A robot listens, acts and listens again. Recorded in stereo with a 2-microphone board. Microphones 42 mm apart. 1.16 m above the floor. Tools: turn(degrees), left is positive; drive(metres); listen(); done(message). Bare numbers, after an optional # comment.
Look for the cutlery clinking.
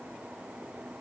listen()
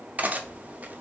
# The cutlery clinking: about 40° right or 140° right.
turn(-40)
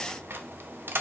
# So it is at 95° right.
turn(-95)
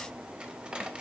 # The cutlery clinking is now 25° right.
turn(-25)
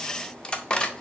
# The cutlery clinking is now 25° left.
turn(25)
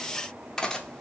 # The cutlery clinking is now 15° left.
turn(15)
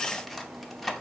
done("Facing the cutlery clinking, under 1 m away.")